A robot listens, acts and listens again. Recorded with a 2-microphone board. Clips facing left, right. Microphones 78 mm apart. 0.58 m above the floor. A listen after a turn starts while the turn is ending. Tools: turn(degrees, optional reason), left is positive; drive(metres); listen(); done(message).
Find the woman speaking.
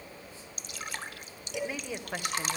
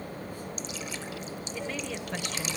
turn(degrees=30)
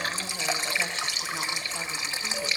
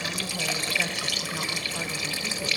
listen()
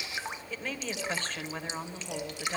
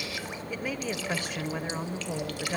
turn(degrees=-15, reason="So it is at 15° right.")
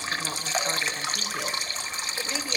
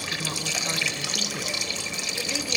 listen()
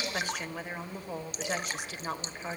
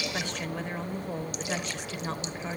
done("Facing the woman speaking.")